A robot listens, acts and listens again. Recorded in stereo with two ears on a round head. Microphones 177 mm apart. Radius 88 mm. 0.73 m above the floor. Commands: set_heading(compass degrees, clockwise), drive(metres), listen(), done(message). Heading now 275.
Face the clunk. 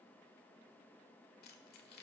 listen()
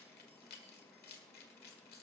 listen()
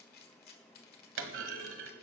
set_heading(345)
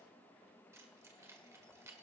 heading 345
listen()
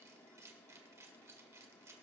done("I heard a clunk, but can't make it out now. It was about straight ahead or 40° right.")